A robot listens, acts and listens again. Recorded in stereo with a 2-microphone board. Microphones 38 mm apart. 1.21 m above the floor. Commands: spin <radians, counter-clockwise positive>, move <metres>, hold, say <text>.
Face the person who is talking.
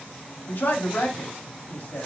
spin 1.05
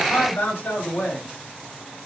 spin 1.05
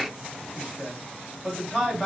say Facing the man speaking, 2 to 4 m away.